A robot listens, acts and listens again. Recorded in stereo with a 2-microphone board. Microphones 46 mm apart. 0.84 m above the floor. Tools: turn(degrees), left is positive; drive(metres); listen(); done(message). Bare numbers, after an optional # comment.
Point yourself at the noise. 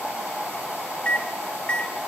# The microwave: about 25° left or 155° left.
turn(25)
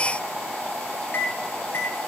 # So it is at 130° left.
turn(130)
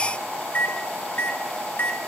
# The microwave is now 45° left.
turn(45)
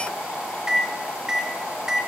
# The microwave is now 15° right.
turn(-15)
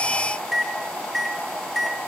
done("Facing the microwave.")